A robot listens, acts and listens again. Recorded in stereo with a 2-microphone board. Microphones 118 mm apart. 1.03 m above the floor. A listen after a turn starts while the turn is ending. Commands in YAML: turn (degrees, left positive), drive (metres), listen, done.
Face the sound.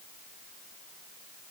listen: true
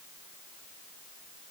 listen: true
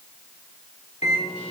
turn: 90
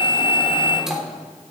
done: "Found it: a microwave, straight ahead, 2 to 4 m away."